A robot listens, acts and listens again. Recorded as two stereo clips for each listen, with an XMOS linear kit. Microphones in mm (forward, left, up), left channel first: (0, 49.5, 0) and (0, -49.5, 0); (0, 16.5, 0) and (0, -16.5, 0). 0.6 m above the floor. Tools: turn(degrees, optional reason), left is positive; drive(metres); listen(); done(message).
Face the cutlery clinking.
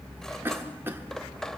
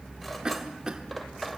turn(degrees=30)
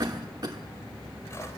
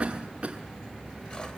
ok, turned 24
listen()
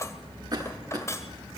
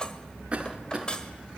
turn(degrees=150, reason="So it is at 150° left.")
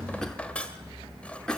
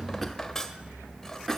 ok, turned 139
turn(degrees=15, reason="The cutlery clinking is now 15° left.")
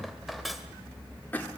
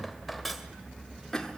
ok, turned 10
done("Found it: cutlery clinking, straight ahead.")